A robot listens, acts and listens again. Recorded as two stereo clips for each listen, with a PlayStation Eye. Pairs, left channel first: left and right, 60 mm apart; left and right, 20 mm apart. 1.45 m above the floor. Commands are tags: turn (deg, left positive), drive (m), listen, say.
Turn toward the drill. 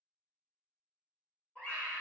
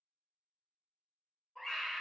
<listen/>
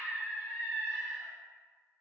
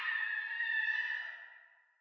<listen/>
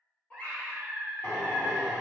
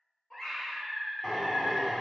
<turn deg="45"/>
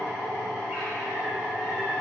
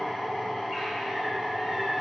<turn deg="90"/>
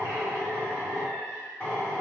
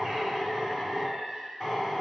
<turn deg="25"/>
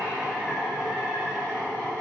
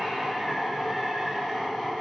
<say>Found it: a drill, straight ahead.</say>